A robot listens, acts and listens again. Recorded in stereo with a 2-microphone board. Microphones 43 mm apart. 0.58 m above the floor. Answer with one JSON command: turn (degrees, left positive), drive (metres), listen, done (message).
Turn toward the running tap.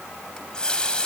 {"turn": 20}
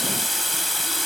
{"done": "Facing the running tap."}